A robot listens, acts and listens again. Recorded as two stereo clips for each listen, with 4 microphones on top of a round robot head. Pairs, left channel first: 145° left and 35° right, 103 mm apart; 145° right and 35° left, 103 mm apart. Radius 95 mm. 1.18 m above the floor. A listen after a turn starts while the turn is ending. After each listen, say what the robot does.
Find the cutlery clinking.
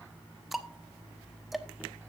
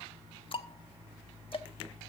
Keep listening.
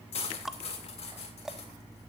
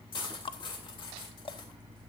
Turn 170° left.
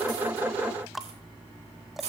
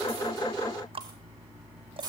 Turn 15° right.
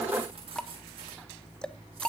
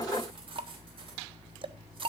Keep listening.
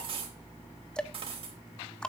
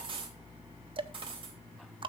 Facing the cutlery clinking.